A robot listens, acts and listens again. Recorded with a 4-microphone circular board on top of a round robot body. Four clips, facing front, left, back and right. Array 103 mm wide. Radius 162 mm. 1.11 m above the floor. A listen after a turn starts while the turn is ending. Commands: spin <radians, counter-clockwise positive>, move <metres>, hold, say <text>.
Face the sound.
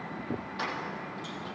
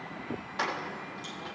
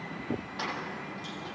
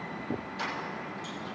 spin 1.66
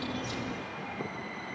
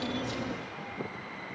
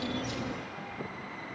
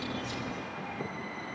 hold
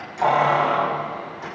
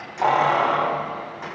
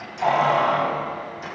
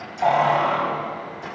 spin 1.05
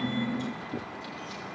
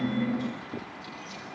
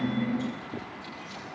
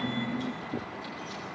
hold
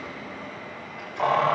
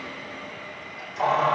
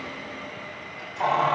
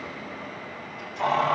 spin 0.44
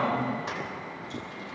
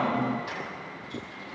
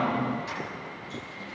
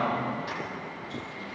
say Facing the keys jangling, over 4 m away.